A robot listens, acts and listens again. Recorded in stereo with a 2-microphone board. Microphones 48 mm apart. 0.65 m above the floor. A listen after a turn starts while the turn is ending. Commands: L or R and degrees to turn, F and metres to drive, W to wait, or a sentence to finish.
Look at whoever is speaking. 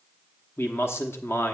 L50
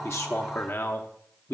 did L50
L60
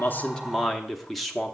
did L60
Facing the man speaking.